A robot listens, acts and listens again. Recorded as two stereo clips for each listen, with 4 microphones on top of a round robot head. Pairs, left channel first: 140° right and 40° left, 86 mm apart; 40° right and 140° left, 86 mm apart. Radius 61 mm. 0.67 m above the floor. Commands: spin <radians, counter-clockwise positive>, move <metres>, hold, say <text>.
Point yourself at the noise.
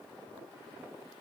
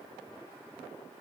hold
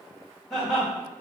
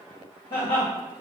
spin -0.79
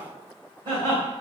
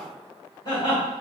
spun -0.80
spin 0.17
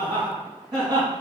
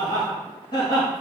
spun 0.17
say Found it: laughter, straight ahead, 2 to 4 m away.